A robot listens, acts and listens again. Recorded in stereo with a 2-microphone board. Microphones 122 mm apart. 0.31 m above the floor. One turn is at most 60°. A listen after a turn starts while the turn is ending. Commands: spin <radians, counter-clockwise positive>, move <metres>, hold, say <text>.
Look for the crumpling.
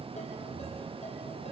hold
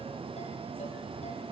hold
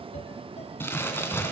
spin 0.35
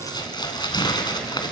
spin 1.05
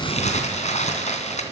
spin 1.05
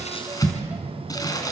spin 0.52
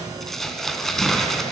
say Facing the crumpling.